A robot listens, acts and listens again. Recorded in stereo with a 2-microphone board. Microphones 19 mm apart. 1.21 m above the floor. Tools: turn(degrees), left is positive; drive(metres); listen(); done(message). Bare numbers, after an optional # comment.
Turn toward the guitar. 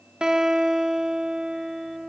# The guitar: about 55° right or 125° right.
turn(-55)
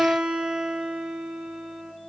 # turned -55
# So it is at 70° right.
turn(-70)
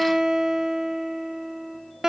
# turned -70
# The guitar is now 30° right.
turn(-30)
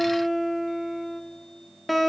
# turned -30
done("Facing the guitar, 1 to 2 m away.")